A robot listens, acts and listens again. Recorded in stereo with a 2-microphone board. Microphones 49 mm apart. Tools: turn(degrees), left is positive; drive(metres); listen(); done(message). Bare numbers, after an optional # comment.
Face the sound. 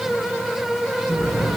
turn(-90)
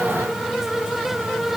done("I heard an explosion from this way, but can't make it out now.")